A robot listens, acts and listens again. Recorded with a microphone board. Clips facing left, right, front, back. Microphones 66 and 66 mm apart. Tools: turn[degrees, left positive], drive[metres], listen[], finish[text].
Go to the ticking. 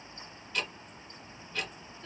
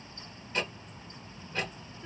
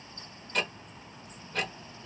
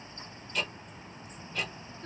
Thought: The ticking: 30° right.
Action: turn[-30]
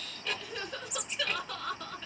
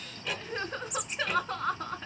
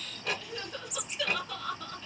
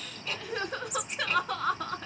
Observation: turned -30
Thought: The ticking is now 10° right.
Action: turn[-10]
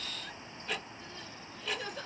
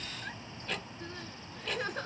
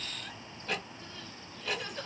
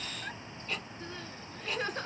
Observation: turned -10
Action: drive[1.0]
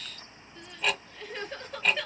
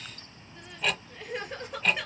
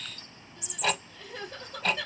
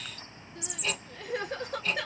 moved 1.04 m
Action: drive[1.0]
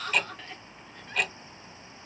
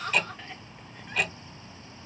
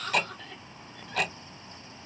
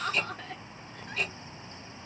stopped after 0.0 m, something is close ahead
Action: finish[Arrived at the ticking, straight ahead.]